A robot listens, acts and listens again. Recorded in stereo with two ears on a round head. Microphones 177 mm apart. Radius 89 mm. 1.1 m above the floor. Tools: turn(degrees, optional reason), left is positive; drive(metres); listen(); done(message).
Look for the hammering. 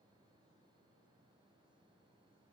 listen()
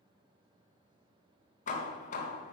turn(degrees=40, reason="The hammering: about 40° left or 140° left.")
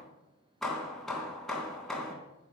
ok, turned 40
done("Facing the hammering.")